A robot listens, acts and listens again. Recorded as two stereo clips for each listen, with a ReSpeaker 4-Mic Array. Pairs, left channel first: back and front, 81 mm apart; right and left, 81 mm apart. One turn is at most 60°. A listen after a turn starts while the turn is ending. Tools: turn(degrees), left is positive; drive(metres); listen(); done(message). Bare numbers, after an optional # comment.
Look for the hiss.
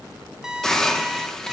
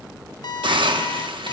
# The hiss: 95° left.
turn(60)
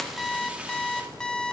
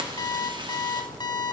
# Nothing new. It was at 35° left.
turn(35)
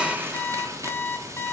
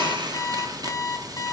listen()
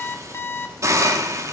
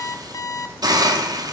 # The hiss is now 55° left.
turn(55)
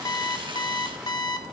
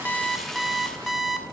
listen()
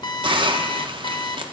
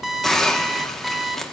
done("Facing the hiss, 1 to 2 m away.")